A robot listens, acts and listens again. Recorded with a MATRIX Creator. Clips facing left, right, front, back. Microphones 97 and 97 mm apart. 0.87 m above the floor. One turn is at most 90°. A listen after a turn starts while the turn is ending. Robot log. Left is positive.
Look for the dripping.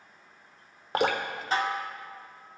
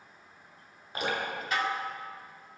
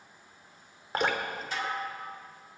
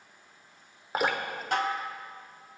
note: The dripping: 95° left.
cmd yaw +90
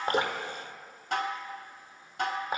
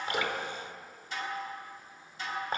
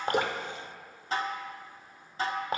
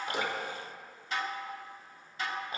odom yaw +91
end: Facing the dripping.